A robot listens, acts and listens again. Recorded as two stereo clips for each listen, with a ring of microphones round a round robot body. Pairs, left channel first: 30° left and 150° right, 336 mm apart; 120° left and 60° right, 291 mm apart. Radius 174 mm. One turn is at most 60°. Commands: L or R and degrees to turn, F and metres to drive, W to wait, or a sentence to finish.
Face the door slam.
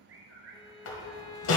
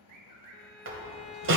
R15
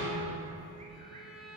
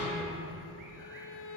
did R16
I heard a door slam from this way, but can't make it out now.